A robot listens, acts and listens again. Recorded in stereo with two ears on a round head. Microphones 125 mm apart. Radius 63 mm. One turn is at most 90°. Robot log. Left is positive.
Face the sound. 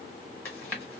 cmd yaw +30
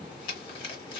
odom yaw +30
note: So it is at 135° left.
cmd yaw +90
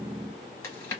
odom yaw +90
note: The chewing is now 20° left.
cmd yaw +20
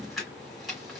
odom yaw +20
end: Found it: chewing, straight ahead.